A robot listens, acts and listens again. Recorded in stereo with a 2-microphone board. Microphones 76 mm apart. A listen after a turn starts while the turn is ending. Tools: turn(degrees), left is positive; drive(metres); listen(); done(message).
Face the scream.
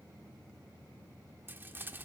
listen()
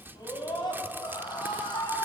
turn(degrees=90)
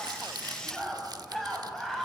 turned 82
done("Facing the scream.")